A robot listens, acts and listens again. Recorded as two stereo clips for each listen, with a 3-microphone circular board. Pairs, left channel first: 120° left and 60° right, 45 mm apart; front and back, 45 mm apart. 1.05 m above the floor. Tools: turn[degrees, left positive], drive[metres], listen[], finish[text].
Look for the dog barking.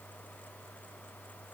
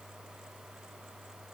Action: listen[]
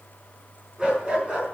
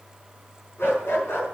Action: finish[Found it: a dog barking, straight ahead, over 4 m away.]